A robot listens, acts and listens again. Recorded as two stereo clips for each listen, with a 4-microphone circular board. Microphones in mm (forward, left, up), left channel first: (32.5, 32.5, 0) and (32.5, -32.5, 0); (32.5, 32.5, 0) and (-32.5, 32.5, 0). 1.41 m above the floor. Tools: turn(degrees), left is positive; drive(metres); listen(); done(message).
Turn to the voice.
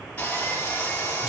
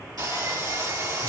listen()
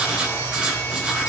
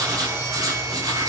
listen()
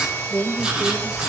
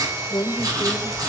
done("Found it: a woman speaking, straight ahead.")